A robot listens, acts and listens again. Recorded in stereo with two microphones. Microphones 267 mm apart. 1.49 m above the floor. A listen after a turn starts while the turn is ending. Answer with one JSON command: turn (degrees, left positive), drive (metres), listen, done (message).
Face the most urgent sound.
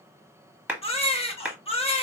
{"turn": 20}
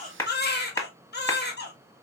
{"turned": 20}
{"turn": 140}
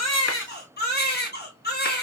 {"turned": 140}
{"turn": 40}
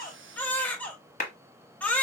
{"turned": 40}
{"done": "Facing the baby crying, under 1 m away."}